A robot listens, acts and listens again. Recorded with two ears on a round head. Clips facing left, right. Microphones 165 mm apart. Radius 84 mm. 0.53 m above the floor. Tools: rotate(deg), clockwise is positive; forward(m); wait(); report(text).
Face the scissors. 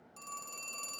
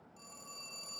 wait()
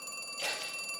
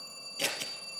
rotate(55)
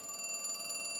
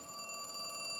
wait()
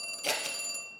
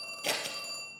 report("Found it: scissors, straight ahead, 2 to 4 m away.")